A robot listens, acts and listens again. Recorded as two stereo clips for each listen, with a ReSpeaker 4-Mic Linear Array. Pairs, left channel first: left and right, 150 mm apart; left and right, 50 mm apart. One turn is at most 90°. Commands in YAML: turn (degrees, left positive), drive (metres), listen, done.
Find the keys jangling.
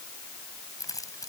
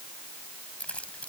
turn: 25
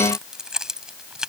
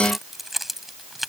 done: "Found it: keys jangling, straight ahead."